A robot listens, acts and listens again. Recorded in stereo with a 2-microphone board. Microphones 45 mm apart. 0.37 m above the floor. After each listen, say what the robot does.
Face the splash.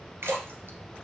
Turn 65° right.
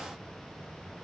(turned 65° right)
Keep listening.
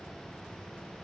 I heard a splash, but can't make it out now. It was about straight ahead or 50° right.